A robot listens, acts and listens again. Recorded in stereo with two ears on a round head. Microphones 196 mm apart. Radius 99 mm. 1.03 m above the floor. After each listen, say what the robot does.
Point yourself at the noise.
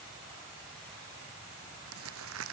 Turn 75° right.
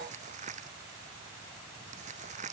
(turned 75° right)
Turn 35° right.
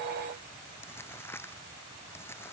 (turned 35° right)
Turn 10° left.
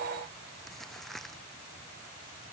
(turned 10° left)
Found it: crumpling, straight ahead.